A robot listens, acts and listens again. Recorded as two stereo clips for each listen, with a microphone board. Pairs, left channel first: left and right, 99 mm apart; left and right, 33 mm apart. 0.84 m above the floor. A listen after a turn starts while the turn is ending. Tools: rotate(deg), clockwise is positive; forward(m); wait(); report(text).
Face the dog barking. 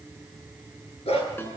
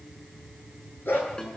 rotate(-90)
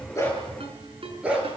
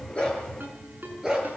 rotate(10)
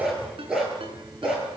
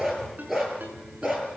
report("Facing the dog barking.")